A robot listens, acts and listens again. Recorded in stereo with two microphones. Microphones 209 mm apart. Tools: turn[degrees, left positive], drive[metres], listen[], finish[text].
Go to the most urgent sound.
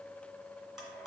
Action: listen[]
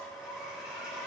Action: listen[]
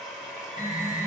Thought: The alarm: about 15° right or 165° right.
Action: turn[-15]
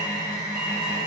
Action: drive[1.0]
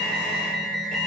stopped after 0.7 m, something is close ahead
Action: finish[Arrived at the alarm, straight ahead.]